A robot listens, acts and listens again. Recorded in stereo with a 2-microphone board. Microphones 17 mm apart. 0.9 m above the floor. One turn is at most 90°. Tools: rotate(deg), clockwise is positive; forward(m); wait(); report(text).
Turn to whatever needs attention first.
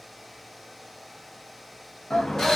rotate(-90)
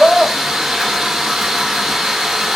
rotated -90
report("Facing the shout, under 1 m away.")